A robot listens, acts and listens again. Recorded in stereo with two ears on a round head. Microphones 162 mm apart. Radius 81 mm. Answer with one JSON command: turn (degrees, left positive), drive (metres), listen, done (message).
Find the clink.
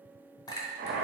{"turn": 20}
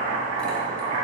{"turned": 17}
{"listen": true}
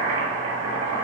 {"listen": true}
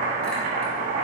{"done": "I heard a clink, but can't make it out now. It was about 5° left or 140° left."}